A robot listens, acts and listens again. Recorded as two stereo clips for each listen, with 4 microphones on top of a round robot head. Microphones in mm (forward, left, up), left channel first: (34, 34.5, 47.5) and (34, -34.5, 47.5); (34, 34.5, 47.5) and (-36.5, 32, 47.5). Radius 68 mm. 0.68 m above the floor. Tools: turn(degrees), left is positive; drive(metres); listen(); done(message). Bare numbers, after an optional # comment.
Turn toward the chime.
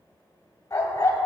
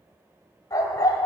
listen()
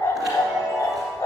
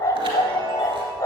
# The chime: 175° right.
turn(-175)
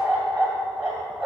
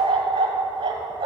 listen()
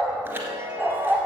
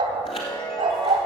# The chime is now 30° right.
turn(-30)
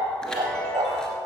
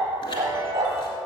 # The chime is now 10° left.
turn(10)
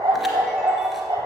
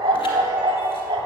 listen()
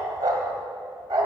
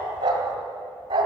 listen()
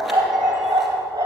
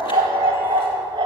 done("Facing where the chime came from. I can't hear it now.")